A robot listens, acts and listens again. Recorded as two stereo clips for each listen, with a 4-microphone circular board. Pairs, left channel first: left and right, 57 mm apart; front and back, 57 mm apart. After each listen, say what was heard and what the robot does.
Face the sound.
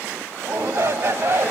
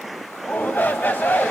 The shout: 50° right. Turn 50° right.
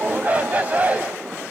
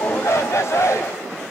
The shout is now 25° right. Turn 25° right.
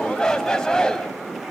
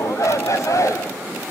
The shout is now 10° left. Turn 10° left.
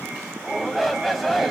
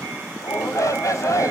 Found it: a shout, straight ahead.